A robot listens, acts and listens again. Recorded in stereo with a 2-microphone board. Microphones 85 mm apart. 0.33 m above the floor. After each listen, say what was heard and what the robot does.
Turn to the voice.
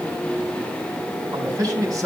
The man speaking: about 40° right or 140° right. Turn 40° right.
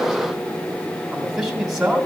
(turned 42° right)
Found it: a man speaking, straight ahead.